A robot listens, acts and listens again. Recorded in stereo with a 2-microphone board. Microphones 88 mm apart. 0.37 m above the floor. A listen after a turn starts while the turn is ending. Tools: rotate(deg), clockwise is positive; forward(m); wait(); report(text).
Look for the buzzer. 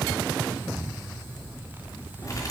wait()
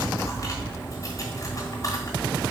wait()
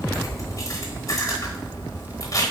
report("I can't make out a buzzer to turn to.")